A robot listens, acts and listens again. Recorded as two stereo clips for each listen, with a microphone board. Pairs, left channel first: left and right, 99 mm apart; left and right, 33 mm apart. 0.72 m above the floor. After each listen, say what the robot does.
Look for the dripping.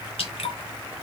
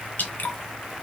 Turn 75° left.
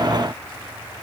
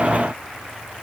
Keep listening.
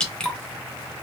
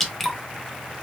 Turn 10° left.
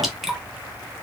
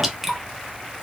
Facing the dripping.